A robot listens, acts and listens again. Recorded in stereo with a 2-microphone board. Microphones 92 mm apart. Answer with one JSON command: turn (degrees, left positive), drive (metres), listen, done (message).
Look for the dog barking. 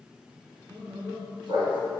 {"turn": -65}
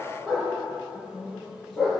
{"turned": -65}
{"done": "Found it: a dog barking, straight ahead."}